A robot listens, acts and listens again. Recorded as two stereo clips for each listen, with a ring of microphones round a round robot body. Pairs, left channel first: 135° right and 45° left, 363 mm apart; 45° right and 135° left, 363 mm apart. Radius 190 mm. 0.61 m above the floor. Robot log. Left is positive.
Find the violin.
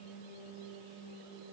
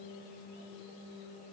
cmd idle
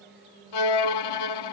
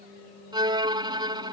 note: The violin: 150° right.
cmd yaw -150
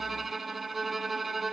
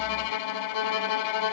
note: The violin is now 45° right.
cmd yaw -45
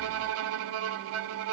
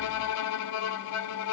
end: Found it: a violin, straight ahead.